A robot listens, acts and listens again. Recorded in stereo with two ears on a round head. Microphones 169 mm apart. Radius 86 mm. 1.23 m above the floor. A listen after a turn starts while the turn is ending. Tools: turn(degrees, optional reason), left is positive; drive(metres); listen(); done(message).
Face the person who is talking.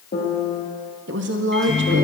turn(degrees=-65, reason="The woman speaking: about 65° right or 115° right.")
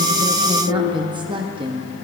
turn(degrees=-25, reason="So it is at 25° right.")
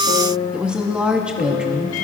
done("Facing the woman speaking.")